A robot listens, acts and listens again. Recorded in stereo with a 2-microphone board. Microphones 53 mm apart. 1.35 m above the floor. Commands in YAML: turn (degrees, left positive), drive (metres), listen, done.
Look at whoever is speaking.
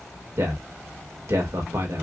turn: -90
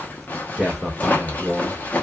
done: "Found it: a man speaking, straight ahead, 2 to 4 m away."